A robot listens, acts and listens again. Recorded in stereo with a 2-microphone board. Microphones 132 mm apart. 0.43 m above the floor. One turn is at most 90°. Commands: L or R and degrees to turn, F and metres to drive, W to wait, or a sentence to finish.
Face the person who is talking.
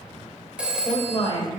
L40
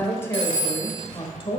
L40
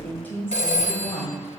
L25
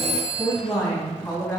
L10
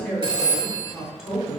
Facing the woman speaking, 2 to 4 m away.